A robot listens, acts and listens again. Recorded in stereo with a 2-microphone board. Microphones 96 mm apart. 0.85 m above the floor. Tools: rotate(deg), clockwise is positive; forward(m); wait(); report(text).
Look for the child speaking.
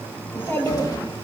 rotate(-25)
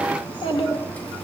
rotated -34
rotate(-115)
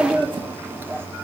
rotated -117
rotate(25)
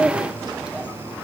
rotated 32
report("Found it: a child speaking, straight ahead.")